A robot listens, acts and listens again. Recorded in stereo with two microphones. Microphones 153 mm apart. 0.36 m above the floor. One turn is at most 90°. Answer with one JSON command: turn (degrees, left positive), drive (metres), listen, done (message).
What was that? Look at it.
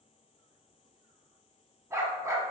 {"turn": -20}
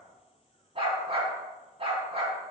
{"turn": -90}
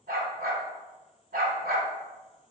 {"turn": -75}
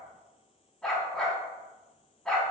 {"done": "Found it: a dog barking, straight ahead, under 1 m away."}